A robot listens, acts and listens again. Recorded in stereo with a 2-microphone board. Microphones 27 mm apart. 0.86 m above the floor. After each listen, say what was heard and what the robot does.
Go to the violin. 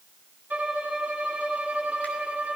Turn 90° right.
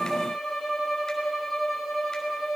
Drive 1.0 m forward.
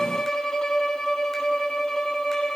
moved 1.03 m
The violin is now 20° left. Turn 20° left.
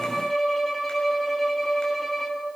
Drive 1.0 m forward.
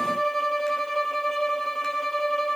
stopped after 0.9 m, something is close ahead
The violin is now 10° left. Turn 10° left.
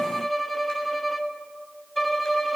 Arrived at the violin, straight ahead.